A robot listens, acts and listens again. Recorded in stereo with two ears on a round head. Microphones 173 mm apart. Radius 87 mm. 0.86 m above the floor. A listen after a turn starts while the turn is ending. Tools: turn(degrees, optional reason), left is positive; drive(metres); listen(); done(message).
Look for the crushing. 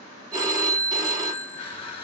turn(degrees=30, reason="The crushing: about 30° left or 150° left.")
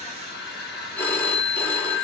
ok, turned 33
turn(degrees=115, reason="So it is at 115° left.")
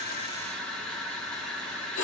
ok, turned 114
done("Facing the crushing, 1 to 2 m away.")